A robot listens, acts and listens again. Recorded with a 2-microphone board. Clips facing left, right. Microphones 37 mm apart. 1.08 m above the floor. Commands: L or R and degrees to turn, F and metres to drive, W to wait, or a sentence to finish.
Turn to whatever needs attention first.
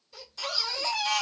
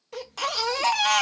R70
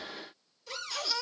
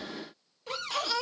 R40
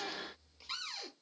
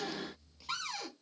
L15
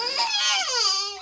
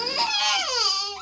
Found it: a baby crying, straight ahead, 1 to 2 m away.